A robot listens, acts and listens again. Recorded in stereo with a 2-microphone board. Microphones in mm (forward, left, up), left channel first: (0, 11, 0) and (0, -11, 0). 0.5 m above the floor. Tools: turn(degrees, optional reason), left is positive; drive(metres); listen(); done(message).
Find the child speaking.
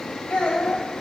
turn(degrees=75, reason="The child speaking: about 75° left or 105° left.")
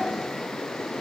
listen()
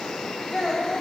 turn(degrees=15, reason="So it is at 15° left.")
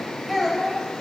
done("Facing the child speaking, 1 to 2 m away.")